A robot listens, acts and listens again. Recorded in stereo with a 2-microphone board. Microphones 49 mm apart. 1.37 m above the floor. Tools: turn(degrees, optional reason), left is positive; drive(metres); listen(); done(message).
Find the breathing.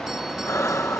turn(degrees=90)
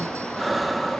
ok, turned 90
done("Facing the breathing.")